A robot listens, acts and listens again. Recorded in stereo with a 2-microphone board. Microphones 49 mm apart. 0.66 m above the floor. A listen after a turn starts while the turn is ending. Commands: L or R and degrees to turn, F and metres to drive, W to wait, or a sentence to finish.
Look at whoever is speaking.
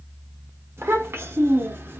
R50
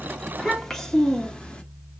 L20
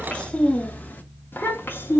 L50
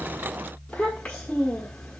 L20
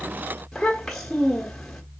L10
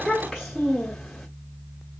Facing the child speaking.